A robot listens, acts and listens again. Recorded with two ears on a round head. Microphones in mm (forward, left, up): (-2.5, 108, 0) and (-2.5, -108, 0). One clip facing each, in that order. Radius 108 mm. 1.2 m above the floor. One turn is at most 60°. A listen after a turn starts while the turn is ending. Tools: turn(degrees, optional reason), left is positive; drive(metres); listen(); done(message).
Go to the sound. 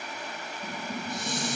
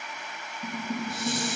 turn(degrees=-30)
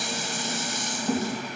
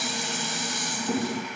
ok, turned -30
turn(degrees=20, reason="So it is at 20° left.")
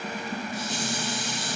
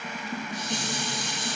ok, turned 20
turn(degrees=10, reason="The dishes clattering is now 10° left.")
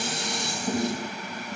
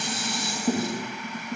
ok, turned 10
drive(metres=1.0)
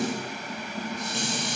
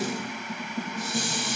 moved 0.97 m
drive(metres=1.0)
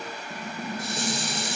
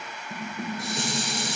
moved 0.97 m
drive(metres=1.0)
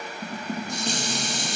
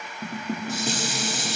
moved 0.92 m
drive(metres=1.0)
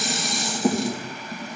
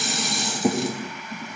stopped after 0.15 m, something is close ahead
done("Arrived at the dishes clattering, straight ahead.")